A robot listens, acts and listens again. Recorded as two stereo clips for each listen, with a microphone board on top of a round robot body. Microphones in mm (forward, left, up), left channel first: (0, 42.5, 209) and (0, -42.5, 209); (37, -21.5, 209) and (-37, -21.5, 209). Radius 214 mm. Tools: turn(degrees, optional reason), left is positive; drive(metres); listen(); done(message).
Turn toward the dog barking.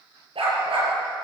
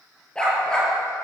turn(degrees=-80, reason="The dog barking: 80° right.")
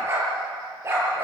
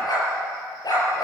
turn(degrees=-30, reason="The dog barking is now 30° right.")
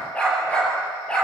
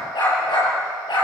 turn(degrees=10, reason="The dog barking is now 10° left.")
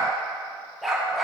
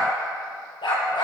done("Facing the dog barking.")